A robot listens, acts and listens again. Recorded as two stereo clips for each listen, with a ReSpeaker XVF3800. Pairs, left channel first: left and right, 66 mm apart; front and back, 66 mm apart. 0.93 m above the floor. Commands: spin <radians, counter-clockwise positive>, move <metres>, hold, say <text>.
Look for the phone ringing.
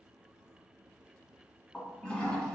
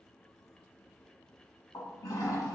hold
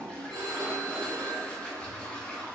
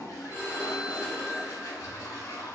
spin -2.01
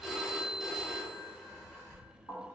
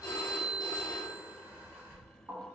say Found it: a phone ringing, straight ahead.